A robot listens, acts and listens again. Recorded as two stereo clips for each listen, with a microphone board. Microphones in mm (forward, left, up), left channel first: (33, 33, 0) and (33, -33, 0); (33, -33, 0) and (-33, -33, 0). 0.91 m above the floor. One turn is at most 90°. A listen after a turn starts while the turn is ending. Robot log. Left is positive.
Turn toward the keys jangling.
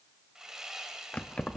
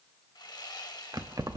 note: The keys jangling: 165° left.
cmd yaw +90
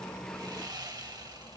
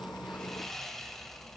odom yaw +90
note: Nothing new. It was at 75° left.
cmd yaw +75
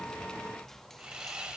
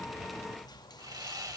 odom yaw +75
cmd idle
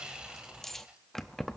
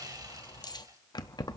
end: Found it: keys jangling, straight ahead, under 1 m away.